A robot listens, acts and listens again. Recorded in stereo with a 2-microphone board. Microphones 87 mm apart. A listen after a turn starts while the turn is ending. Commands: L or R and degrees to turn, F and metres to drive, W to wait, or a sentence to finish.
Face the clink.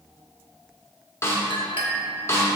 L70
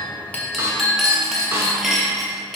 Facing the clink.